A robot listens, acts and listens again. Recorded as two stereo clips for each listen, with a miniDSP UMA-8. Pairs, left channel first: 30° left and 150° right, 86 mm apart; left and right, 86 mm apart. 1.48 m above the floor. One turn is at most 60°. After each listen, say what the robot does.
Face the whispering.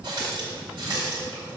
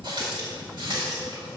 Keep listening.
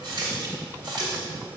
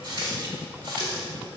Keep listening.
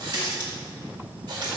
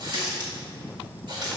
I can't make out whispering, only a running tap.